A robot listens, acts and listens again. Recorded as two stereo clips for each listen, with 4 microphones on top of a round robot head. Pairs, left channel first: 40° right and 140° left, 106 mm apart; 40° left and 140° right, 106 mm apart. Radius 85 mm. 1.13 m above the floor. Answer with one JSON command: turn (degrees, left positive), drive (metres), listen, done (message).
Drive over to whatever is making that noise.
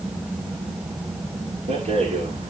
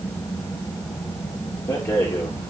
{"turn": 105}
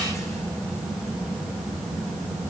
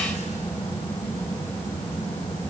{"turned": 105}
{"listen": true}
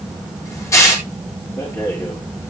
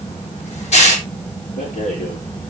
{"turn": 25}
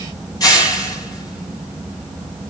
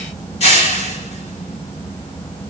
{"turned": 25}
{"turn": 15}
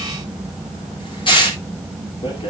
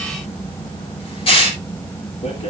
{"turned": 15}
{"drive": 1.0}
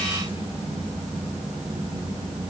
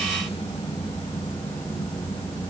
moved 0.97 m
{"listen": true}
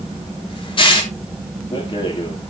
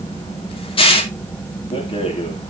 {"drive": 1.0}
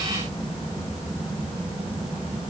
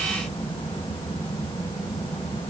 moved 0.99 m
{"listen": true}
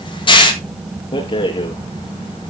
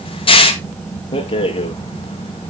{"drive": 1.0}
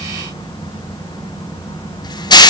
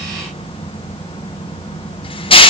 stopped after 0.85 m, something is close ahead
{"done": "Arrived at the rattle, straight ahead."}